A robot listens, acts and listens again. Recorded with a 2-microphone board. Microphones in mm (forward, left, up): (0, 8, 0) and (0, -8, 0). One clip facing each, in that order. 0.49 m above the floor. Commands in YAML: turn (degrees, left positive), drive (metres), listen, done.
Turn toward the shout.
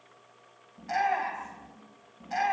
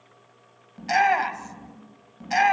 turn: -65
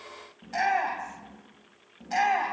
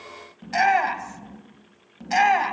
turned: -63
turn: -45
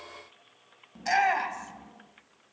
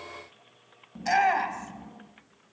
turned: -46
done: "Found it: a shout, straight ahead, 2 to 4 m away."